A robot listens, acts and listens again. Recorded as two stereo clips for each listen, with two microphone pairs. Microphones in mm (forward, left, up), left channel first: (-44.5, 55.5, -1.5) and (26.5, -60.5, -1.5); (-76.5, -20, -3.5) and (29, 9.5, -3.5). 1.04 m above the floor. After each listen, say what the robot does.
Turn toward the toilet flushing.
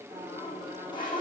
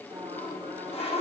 Turn 175° left.
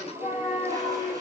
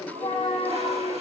Facing the toilet flushing.